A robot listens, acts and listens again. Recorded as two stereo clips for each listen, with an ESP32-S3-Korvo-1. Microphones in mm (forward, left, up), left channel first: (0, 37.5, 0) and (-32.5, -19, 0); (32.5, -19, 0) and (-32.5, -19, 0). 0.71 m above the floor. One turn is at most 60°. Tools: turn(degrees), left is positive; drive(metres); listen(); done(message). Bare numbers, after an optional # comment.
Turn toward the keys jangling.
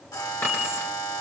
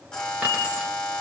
# The keys jangling: 115° left.
turn(60)
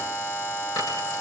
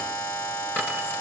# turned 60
# The keys jangling is now 55° left.
turn(55)
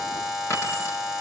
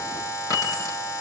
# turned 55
# The keys jangling is now 15° left.
turn(15)
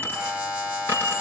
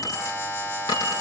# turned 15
done("Found it: keys jangling, straight ahead.")